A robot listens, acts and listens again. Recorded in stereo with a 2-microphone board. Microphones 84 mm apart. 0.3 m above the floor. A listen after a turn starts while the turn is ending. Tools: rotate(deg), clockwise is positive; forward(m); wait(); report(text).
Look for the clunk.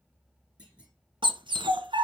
rotate(30)
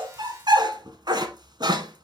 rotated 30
wait()
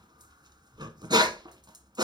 report("I heard a clunk, but can't make it out now. It was about 15° left or 135° right.")